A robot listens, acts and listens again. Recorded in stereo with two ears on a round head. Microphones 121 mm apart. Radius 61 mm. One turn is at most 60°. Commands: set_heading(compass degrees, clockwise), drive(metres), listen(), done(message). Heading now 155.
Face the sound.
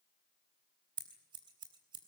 set_heading(190)
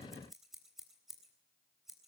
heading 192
done("Facing the scissors.")